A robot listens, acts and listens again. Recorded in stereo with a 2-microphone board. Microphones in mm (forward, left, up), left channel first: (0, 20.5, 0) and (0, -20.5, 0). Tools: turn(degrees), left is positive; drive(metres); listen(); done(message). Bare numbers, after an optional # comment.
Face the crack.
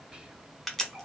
turn(30)
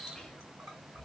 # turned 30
listen()
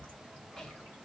done("I heard a crack, but can't make it out now. It was about 25° right or 145° left.")